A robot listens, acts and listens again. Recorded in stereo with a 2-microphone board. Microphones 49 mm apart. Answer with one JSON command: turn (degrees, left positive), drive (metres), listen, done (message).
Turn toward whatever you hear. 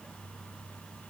{"listen": true}
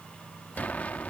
{"turn": 35}
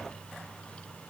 {"listen": true}
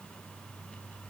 {"done": "I heard an explosion, but can't make it out now. It was about straight ahead or 110° left."}